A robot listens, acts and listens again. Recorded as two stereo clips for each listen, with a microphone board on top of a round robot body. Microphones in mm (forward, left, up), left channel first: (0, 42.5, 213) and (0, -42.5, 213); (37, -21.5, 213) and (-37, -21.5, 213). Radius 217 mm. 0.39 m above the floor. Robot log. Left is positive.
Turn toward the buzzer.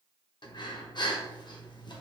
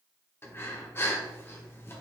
cmd idle
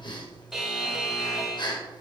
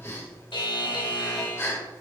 end: Found it: a buzzer, straight ahead.